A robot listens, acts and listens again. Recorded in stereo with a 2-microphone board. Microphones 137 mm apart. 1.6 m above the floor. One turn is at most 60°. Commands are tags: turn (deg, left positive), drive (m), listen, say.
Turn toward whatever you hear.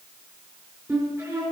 <turn deg="-25"/>
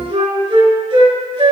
<turn deg="-60"/>
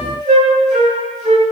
<turn deg="-60"/>
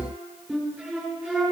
<say>Facing the flute, 2 to 4 m away.</say>